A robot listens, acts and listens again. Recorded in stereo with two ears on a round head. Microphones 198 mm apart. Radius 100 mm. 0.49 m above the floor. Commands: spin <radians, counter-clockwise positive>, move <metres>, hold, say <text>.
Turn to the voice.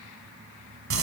hold
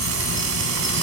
hold
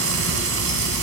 say I can't make out anyone speaking, only frying.